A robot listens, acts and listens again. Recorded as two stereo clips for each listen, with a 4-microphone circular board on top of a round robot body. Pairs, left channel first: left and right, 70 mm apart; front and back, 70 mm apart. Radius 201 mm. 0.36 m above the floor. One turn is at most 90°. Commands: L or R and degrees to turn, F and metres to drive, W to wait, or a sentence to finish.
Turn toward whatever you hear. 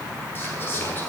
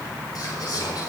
L30
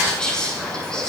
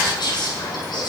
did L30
L10
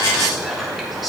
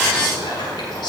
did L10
Found it: whispering, straight ahead, over 4 m away.